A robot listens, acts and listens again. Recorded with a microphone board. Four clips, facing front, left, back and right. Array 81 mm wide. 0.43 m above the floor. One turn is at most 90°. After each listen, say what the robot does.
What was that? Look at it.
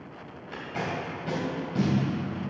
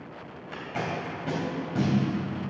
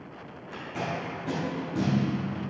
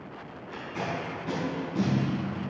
Turn 65° left.
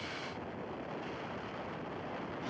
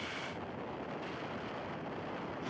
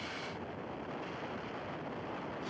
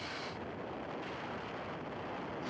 Keep listening.
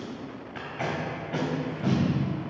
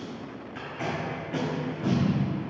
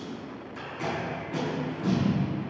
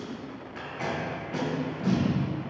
Found it: tape being pulled, straight ahead, 2 to 4 m away.